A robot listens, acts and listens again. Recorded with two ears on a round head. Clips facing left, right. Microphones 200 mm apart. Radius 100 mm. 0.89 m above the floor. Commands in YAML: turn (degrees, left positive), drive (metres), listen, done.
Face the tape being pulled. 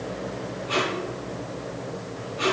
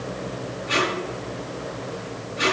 turn: -25
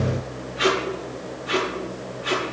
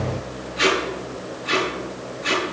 turn: -130
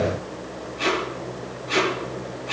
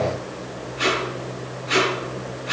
turn: -20
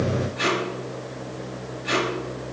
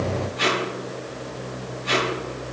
done: "Facing the tape being pulled, over 4 m away."